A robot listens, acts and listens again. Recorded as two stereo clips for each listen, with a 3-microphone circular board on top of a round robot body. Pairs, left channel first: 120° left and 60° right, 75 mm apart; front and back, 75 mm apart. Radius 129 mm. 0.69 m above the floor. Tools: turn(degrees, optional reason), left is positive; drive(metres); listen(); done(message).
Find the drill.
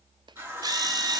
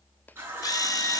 turn(degrees=-35, reason="The drill: 35° right.")
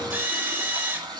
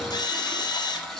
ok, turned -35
done("Facing the drill.")